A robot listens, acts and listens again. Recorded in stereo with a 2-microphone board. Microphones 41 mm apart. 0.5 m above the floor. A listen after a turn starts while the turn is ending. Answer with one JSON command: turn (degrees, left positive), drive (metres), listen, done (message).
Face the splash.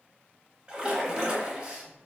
{"turn": -25}
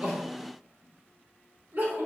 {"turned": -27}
{"listen": true}
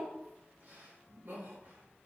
{"done": "I heard a splash, but can't make it out now. It was about 5° left or 130° right."}